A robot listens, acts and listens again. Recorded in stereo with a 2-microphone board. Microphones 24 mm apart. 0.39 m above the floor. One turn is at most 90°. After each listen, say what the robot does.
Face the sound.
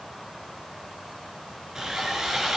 Turn 25° right.
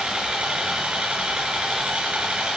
Turn 90° right.
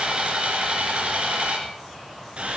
Turn 55° right.
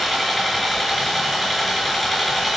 Facing the sawing, 2 to 4 m away.